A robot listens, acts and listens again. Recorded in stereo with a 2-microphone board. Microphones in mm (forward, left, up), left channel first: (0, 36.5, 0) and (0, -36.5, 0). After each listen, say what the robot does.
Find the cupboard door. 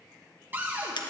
Turn 25° right.
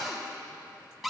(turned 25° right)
Found it: a cupboard door, straight ahead, 1 to 2 m away.